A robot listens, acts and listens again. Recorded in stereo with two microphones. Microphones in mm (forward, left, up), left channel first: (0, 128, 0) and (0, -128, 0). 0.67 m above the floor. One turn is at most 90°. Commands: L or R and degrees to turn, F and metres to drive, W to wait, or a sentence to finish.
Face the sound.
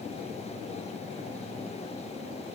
W
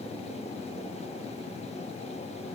W
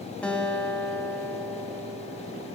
L30
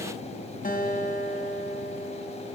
L90
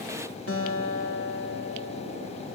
L65
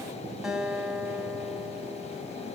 Facing the guitar, over 4 m away.